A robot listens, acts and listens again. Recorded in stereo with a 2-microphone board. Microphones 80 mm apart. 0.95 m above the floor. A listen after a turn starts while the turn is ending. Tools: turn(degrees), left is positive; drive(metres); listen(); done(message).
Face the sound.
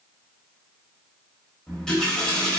turn(degrees=30)
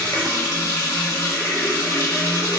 turn(degrees=145)
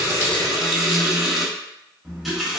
done("Facing the running tap, under 1 m away.")